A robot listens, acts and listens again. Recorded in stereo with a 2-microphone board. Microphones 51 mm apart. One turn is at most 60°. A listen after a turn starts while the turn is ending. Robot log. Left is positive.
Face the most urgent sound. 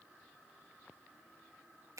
cmd idle
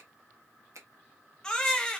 cmd yaw +30
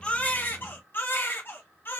note: So it is at 135° left.
cmd yaw +60
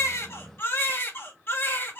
note: The baby crying is now 50° left.
cmd yaw +50
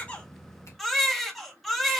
end: Facing the baby crying.